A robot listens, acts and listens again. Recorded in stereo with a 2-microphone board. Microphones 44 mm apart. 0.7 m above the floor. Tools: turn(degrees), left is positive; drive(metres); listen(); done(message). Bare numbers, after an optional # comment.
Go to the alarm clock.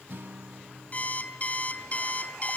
# The alarm clock: about 30° left or 150° left.
turn(30)
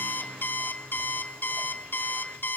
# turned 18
# So it is at 130° left.
turn(130)
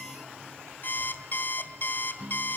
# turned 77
# The alarm clock is now 55° left.
turn(55)
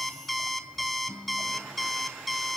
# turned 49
drive(1.0)
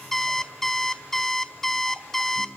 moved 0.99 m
# The alarm clock is now 10° left.
turn(10)
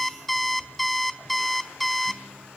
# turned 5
drive(1.0)
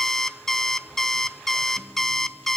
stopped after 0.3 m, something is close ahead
# The alarm clock is now 10° left.
turn(10)
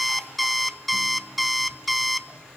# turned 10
done("I am next to the alarm clock.")